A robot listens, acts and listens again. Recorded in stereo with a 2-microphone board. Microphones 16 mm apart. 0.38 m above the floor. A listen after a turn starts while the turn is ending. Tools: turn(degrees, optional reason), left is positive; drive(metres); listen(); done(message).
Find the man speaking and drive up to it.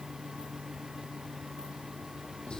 listen()
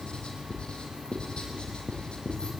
listen()
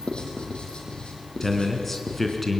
turn(degrees=15, reason="The man speaking: about 15° left or 165° left.")
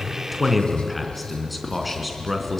drive(metres=1.0)
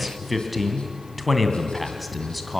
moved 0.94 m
drive(metres=1.0)
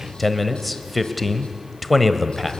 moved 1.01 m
drive(metres=1.0)
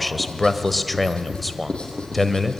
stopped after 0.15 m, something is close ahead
turn(degrees=10, reason="The man speaking is now 10° left.")
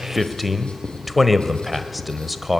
done("Arrived at the man speaking, straight ahead.")